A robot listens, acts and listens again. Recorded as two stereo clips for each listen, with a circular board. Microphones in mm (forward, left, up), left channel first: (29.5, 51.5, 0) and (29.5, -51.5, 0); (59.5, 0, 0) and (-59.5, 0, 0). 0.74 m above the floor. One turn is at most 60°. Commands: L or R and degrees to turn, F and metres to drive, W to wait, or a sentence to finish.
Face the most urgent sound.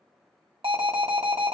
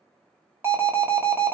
R60
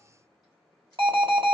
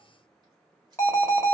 R60
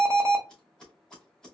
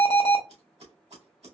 R25
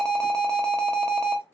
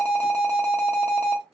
L10
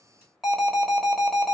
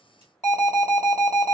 Facing the alarm, 1 to 2 m away.